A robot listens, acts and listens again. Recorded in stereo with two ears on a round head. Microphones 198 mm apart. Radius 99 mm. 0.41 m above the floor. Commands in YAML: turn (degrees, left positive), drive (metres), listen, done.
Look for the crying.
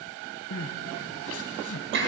turn: 70
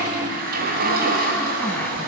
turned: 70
listen: true
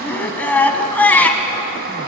turn: 10
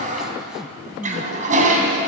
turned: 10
done: "Found it: crying, straight ahead, 1 to 2 m away."